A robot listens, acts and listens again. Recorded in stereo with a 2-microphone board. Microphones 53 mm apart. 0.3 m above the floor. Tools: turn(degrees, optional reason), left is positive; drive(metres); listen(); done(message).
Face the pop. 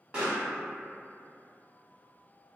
turn(degrees=-20, reason="The pop: about 20° right or 160° right.")
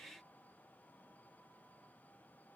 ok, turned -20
listen()
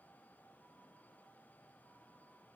done("I heard a pop, but can't make it out now. It was about straight ahead or 140° right.")